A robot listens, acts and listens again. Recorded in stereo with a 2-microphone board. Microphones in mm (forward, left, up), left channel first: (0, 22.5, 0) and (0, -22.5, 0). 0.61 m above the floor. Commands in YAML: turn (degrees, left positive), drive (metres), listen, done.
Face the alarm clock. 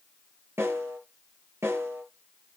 listen: true
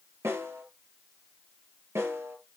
listen: true
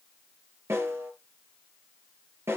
done: "I can't make out an alarm clock to turn to."